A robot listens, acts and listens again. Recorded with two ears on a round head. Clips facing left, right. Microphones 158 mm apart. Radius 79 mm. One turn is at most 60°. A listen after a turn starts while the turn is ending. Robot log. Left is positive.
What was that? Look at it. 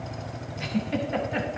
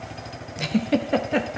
note: The giggle: about 60° right or 120° right.
cmd yaw -60
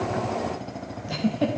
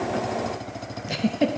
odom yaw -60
note: So it is at 30° right.
cmd yaw -30
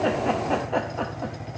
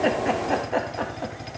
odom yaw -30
end: Facing the giggle, under 1 m away.